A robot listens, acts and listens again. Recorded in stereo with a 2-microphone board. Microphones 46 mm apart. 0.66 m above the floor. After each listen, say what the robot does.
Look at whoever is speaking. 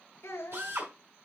Turn 90° left.
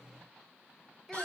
Found it: a child speaking, straight ahead, 2 to 4 m away.